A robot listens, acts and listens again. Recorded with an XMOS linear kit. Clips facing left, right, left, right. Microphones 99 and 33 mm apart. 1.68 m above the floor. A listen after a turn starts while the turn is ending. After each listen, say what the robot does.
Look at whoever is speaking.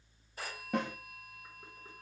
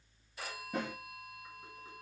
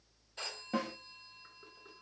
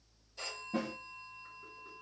Keep listening.
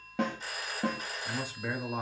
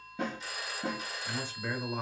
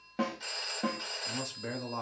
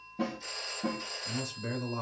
Turn 30° left.
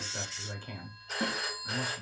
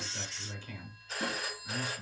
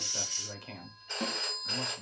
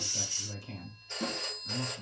Turn 135° left.
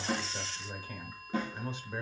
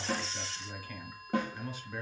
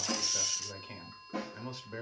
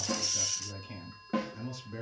Turn 25° left.
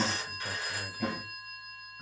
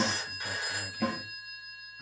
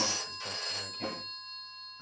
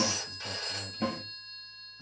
Turn 15° left.
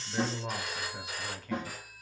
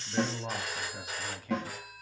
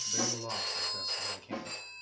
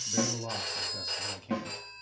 Facing the man speaking, 1 to 2 m away.